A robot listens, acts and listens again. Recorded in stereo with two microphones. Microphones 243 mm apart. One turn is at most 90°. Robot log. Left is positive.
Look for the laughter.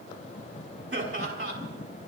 note: The laughter: about 65° right or 115° right.
cmd yaw -65
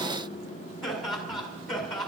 end: Found it: laughter, straight ahead, over 4 m away.